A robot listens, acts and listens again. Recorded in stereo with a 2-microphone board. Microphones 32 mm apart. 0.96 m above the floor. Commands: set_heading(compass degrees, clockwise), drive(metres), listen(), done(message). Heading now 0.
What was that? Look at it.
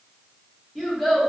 set_heading(330)
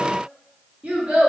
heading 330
set_heading(15)
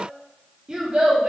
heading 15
set_heading(45)
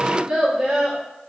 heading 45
set_heading(60)
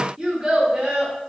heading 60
set_heading(75)
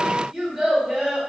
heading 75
done("Found it: a child speaking, straight ahead.")